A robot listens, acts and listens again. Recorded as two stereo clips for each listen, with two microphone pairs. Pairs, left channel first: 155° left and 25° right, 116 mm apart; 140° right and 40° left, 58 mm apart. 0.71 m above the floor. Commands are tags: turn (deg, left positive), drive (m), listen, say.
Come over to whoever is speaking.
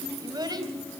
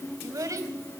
<turn deg="30"/>
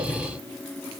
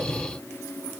<listen/>
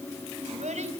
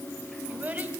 <turn deg="-15"/>
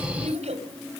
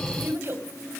<drive m="1.0"/>
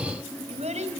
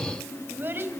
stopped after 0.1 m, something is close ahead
<turn deg="-10"/>
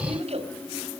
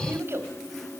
<say>Blocked. The child speaking is further on, straight ahead.</say>